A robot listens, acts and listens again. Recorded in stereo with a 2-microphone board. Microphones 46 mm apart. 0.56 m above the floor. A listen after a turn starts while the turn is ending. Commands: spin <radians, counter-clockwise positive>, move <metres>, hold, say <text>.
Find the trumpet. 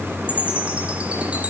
hold
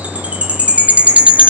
hold
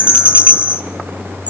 say I can't make out a trumpet, only a chime.